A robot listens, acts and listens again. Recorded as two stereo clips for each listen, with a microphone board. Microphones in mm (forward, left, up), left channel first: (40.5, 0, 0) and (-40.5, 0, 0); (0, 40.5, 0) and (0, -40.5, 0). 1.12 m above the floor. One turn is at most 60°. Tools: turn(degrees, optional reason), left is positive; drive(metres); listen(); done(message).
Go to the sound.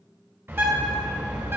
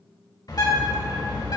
turn(degrees=60, reason="The bird: 120° left.")
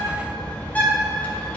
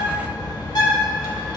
turn(degrees=60, reason="The bird is now 70° left.")
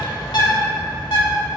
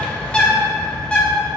turn(degrees=15, reason="The bird is now 15° left.")
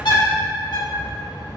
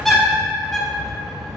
drive(metres=1.0)
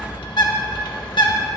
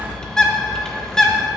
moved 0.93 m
turn(degrees=10, reason="The bird is now 10° left.")
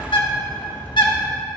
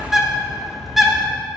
drive(metres=1.0)
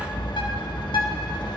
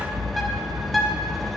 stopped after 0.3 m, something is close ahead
done("I am next to the bird.")